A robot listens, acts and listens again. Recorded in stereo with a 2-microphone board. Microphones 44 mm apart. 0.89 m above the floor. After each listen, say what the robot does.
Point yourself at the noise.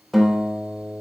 Turn 30° left.
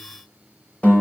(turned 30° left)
Turn 145° left.
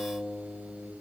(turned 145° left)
Found it: a guitar, straight ahead.